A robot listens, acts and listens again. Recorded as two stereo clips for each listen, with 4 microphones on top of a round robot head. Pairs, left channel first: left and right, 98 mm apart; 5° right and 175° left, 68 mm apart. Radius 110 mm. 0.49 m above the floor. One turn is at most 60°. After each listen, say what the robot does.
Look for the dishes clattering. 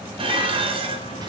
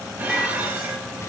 Turn 60° right.
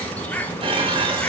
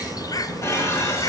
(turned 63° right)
Turn 55° right.
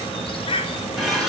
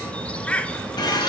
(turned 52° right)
Found it: dishes clattering, straight ahead.